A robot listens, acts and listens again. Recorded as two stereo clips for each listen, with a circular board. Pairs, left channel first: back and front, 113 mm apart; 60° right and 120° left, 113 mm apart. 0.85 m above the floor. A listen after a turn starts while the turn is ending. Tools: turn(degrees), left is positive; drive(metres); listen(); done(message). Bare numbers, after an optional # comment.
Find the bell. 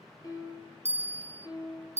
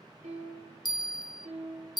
# The bell: 10° right.
turn(-10)
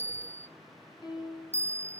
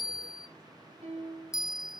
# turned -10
done("Found it: a bell, straight ahead.")